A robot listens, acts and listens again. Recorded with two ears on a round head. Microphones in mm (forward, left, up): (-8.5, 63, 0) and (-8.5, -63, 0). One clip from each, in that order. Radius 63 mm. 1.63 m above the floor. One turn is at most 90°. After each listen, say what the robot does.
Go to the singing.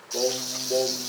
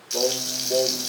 Turn 25° right.
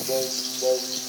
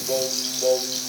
Turn 90° right.
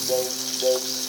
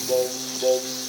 Turn 40° right.
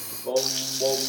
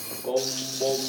Drive 1.0 m forward.
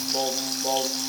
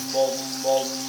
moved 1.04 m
Turn 15° right.
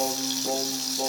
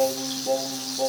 Drive 1.0 m forward.
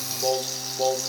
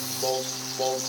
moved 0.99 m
Drive 1.0 m forward.
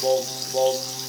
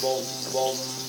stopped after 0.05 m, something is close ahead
I am next to the singing.